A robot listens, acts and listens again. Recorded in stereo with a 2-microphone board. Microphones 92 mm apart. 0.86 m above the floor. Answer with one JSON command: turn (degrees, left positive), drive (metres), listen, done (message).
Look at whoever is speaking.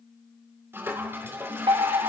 {"listen": true}
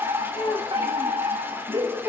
{"turn": 70}
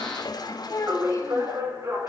{"turn": 40}
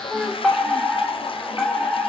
{"done": "Facing the child speaking."}